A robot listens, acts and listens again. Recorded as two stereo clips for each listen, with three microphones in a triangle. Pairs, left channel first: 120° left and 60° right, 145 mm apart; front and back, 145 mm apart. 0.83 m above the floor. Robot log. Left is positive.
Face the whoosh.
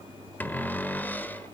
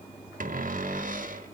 cmd idle
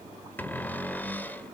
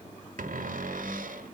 cmd idle
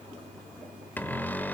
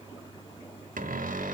end: I can't make out a whoosh, only a cupboard door.